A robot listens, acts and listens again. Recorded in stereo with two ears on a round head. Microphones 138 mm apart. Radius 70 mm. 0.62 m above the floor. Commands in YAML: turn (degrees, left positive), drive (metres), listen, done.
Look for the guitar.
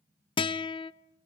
turn: 35
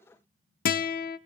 turn: 110
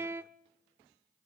turn: -15
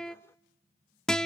done: "Facing the guitar, under 1 m away."